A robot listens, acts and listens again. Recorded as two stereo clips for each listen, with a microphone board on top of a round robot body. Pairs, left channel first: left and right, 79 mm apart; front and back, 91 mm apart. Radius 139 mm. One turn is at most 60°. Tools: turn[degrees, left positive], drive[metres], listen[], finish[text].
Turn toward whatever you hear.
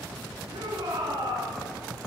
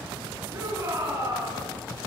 Thought: The shout: 120° right.
Action: turn[-60]
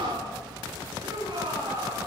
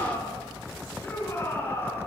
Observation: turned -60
Thought: The shout is now 60° right.
Action: turn[-60]
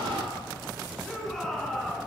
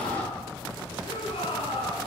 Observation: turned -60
Action: finish[Facing the shout.]